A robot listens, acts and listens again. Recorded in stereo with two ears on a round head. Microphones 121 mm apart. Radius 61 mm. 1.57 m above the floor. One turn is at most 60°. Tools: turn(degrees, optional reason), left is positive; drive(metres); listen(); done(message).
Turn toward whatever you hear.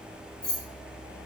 turn(degrees=30)
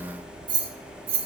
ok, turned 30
turn(degrees=-45, reason="So it is at 45° right.")
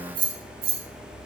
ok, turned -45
turn(degrees=-45, reason="The keys jangling is now 45° right.")
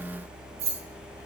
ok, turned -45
turn(degrees=-50, reason="The keys jangling is now 50° right.")
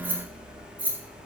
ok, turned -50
turn(degrees=-15, reason="The keys jangling is now 15° right.")
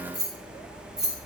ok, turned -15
done("Facing the keys jangling.")